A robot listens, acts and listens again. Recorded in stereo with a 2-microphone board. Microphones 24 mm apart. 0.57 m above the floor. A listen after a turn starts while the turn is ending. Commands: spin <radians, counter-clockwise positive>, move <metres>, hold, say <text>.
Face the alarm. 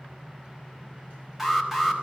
spin -0.52
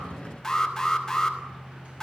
spin 0.35
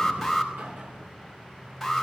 say Found it: an alarm, straight ahead.